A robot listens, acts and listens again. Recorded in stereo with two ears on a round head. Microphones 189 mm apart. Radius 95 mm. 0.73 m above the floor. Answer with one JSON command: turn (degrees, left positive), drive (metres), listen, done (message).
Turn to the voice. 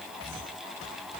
{"listen": true}
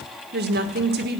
{"turn": -50}
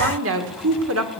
{"turn": -75}
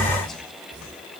{"listen": true}
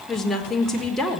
{"done": "Found it: a woman speaking, straight ahead."}